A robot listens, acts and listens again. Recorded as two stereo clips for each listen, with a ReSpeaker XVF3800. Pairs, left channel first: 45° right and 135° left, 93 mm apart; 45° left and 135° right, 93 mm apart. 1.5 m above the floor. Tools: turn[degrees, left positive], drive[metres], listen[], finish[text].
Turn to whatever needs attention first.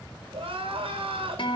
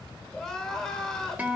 Thought: The crying: 125° left.
Action: turn[125]
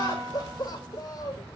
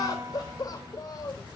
Action: finish[Facing the crying.]